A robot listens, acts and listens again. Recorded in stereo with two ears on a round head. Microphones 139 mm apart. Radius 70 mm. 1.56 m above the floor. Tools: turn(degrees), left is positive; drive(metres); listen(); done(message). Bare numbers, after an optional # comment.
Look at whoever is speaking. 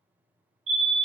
listen()
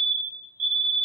listen()
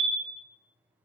done("I can't make out anyone speaking to turn to.")